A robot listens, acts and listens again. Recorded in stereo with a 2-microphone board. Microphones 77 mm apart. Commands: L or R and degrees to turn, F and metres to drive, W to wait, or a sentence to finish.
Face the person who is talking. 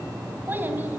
R25
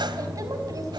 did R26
R130
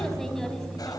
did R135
W
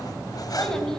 Facing the child speaking.